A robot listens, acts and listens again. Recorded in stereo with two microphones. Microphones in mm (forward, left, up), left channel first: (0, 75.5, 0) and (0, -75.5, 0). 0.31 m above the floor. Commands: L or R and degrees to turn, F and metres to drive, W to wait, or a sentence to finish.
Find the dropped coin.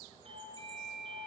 W
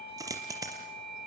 R25
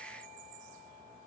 W
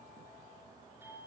I heard a dropped coin, but can't make it out now. It was about straight ahead or 130° right.